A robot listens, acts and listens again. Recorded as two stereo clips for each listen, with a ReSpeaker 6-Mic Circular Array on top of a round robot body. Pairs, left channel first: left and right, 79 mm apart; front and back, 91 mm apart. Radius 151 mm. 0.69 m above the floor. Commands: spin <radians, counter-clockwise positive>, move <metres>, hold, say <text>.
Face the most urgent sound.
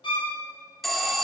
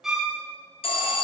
say Found it: an alarm, straight ahead, 1 to 2 m away.